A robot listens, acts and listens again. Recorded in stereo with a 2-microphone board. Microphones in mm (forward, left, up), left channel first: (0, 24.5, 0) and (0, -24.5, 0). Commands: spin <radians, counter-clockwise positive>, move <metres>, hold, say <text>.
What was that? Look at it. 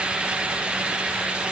hold
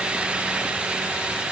hold
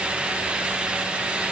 say I can't make out anything to turn to.